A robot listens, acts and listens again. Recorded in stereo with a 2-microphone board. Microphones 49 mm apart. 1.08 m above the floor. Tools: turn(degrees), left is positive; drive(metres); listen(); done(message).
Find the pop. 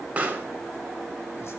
turn(degrees=-25)
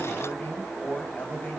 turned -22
listen()
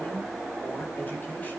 done("I heard a pop, but can't make it out now. It was about 5° right or 130° right.")